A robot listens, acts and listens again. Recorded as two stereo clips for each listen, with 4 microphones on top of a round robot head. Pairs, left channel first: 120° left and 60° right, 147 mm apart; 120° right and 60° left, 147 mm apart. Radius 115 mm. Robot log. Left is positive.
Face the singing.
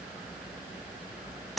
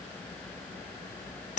cmd idle
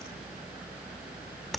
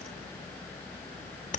cmd idle
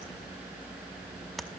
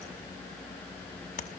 end: I can't make out singing to turn to.